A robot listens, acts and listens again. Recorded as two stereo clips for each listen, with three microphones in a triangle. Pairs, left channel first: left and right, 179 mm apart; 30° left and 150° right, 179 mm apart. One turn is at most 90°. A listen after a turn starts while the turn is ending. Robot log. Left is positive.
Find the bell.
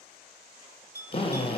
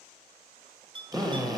note: The bell: 90° right.
cmd yaw -90
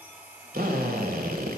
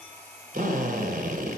cmd idle
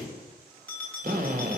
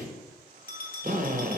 note: The bell is now 10° left.
cmd yaw +10
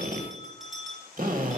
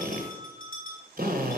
end: Facing the bell.